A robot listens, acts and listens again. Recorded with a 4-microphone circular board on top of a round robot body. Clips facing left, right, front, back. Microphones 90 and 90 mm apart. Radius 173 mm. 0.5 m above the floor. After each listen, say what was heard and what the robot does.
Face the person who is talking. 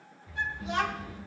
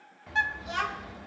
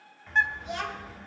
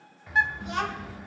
The child speaking: 150° left. Turn 150° left.
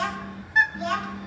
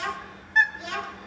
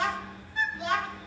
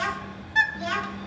The child speaking is now 55° left. Turn 55° left.
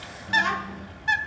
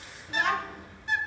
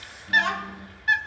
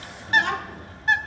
Found it: a child speaking, straight ahead, over 4 m away.